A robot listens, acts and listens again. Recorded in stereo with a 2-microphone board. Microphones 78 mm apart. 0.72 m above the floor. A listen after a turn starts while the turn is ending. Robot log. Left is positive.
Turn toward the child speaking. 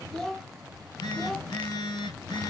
cmd yaw +30
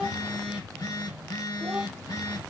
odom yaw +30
cmd idle
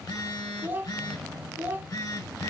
note: So it is at 25° right.
cmd yaw -25
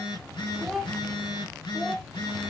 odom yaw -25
end: Facing the child speaking, under 1 m away.